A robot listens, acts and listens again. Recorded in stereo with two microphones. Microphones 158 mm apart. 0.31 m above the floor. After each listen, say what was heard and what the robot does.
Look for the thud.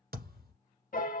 Turn 90° right.
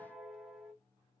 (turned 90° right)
I heard a thud from this way, but can't make it out now.